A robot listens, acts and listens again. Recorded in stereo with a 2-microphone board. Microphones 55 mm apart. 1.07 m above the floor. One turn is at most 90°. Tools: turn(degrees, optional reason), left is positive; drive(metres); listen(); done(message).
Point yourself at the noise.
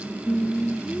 turn(degrees=20, reason="The singing: about 20° left or 160° left.")
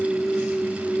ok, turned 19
turn(degrees=30)
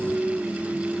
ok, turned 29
turn(degrees=-15, reason="So it is at 15° right.")
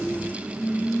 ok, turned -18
turn(degrees=10, reason="The singing is now 10° left.")
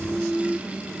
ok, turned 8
done("Found it: singing, straight ahead.")